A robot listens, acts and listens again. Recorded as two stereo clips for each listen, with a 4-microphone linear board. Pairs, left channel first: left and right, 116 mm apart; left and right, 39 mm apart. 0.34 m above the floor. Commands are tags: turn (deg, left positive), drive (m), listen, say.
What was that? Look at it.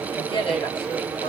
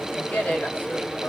<turn deg="45"/>
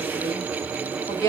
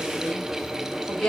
<turn deg="25"/>
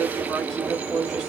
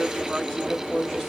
<say>Found it: a woman speaking, straight ahead, 1 to 2 m away.</say>